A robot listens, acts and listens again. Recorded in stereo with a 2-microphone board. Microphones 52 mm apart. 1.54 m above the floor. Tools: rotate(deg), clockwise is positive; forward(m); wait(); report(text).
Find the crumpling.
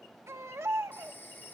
wait()
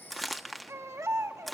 rotate(-30)
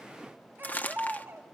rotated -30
rotate(-145)
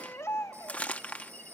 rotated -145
rotate(-25)
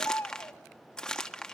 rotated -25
rotate(-10)
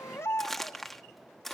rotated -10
report("Facing the crumpling, 1 to 2 m away.")